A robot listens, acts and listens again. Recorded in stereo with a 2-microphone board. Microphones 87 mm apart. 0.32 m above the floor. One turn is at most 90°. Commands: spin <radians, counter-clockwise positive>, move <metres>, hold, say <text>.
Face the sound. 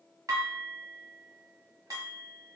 spin -0.79
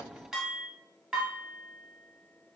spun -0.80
say Found it: dishes clattering, straight ahead.